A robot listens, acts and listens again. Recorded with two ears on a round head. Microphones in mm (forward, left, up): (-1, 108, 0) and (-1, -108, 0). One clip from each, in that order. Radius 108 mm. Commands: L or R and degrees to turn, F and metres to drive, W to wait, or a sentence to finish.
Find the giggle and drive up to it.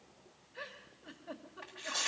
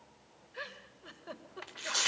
R90
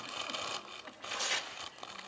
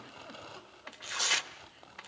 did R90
W
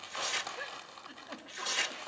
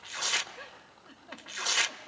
L10
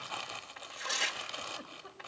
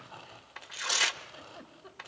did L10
F1.0
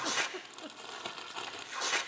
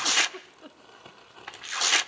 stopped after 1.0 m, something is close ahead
I am next to the giggle.